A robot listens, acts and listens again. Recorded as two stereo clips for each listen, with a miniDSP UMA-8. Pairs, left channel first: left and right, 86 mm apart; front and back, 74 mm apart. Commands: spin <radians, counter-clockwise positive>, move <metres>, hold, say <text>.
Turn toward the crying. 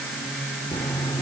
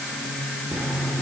hold
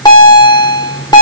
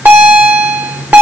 hold
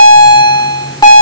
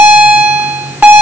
say I can't make out crying, only a bell.